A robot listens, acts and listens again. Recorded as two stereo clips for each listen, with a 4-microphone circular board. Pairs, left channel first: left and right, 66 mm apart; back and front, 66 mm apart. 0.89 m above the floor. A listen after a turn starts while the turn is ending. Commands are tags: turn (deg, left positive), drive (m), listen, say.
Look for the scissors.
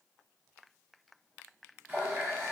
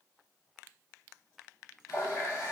<listen/>
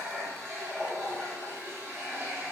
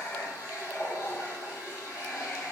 <listen/>
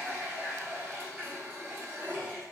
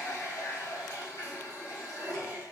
<say>I can't make out scissors, only a running tap.</say>